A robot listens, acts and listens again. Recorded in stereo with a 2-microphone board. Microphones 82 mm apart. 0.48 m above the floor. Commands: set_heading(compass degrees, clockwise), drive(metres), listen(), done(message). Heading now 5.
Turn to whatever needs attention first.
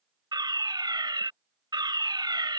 set_heading(70)
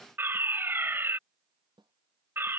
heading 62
set_heading(97)
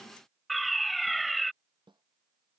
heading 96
done("Facing the fire alarm.")